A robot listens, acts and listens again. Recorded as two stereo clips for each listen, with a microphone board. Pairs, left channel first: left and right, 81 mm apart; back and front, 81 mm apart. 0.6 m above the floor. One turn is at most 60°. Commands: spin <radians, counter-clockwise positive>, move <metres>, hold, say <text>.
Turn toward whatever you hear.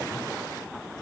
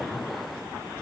hold
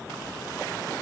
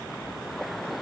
hold
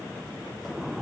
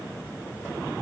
say I can't make out anything to turn to.